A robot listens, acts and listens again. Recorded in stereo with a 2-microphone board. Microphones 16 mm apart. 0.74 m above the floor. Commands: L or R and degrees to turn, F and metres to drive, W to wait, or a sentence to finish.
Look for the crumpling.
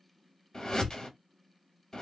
W
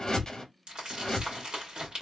R60
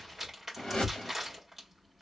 Facing the crumpling.